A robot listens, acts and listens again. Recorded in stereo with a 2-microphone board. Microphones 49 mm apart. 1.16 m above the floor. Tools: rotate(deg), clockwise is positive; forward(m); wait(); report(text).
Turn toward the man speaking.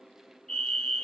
wait()
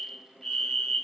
wait()
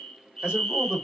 rotate(15)
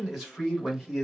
rotate(-30)
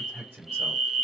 rotate(30)
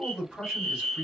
report("Facing the man speaking, 2 to 4 m away.")